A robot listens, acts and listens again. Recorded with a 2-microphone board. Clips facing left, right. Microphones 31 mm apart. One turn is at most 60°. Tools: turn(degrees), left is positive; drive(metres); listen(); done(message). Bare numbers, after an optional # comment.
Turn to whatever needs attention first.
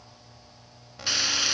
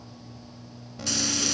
turn(30)
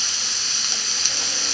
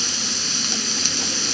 listen()
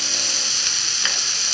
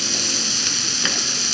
listen()
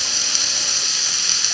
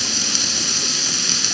done("I heard an alarm, but can't make it out now. It was about 20° right or 140° left.")